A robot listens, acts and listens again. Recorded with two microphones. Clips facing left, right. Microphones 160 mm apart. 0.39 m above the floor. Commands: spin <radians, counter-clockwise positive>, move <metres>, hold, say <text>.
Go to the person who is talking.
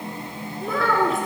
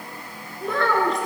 spin 0.52
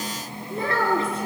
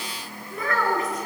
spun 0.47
spin 2.62
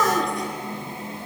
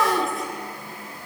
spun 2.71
move 1.0
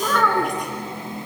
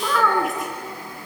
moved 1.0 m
move 1.0
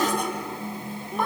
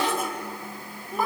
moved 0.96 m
move 1.0
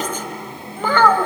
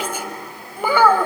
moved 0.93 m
spin -0.17
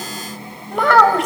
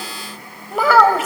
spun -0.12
move 1.0
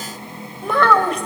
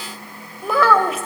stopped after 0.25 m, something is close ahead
say Arrived at the child speaking, straight ahead.